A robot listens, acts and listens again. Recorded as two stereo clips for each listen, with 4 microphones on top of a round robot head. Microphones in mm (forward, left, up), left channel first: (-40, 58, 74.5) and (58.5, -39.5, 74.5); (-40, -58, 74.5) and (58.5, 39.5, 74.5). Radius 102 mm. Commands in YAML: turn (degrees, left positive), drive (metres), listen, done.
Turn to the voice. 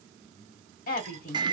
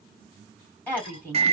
turn: 145
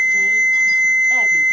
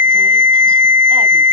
listen: true
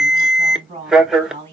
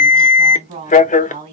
turn: 10
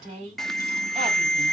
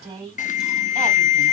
done: "Facing the woman speaking, 2 to 4 m away."